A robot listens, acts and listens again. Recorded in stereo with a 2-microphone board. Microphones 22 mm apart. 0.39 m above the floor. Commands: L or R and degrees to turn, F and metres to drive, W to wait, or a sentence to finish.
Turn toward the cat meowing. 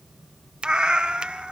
R55
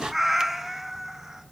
R25
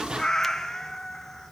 L10
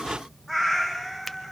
R10
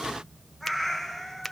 Facing the cat meowing, 2 to 4 m away.